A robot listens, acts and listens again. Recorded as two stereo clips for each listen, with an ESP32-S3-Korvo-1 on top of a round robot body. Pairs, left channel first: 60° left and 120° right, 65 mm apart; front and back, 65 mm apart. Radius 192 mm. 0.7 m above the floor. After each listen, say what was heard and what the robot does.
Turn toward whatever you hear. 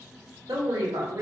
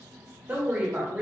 The woman speaking: 110° right. Turn 110° right.
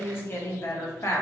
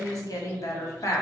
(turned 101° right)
The woman speaking is now 25° left. Turn 25° left.
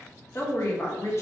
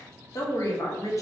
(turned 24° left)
The woman speaking is now 25° left. Turn 25° left.
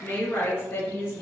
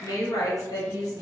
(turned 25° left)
The woman speaking is now 15° left. Turn 15° left.
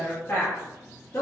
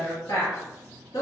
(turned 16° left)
The woman speaking is now 10° left. Turn 10° left.
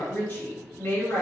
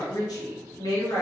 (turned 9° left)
Found it: a woman speaking, straight ahead, 1 to 2 m away.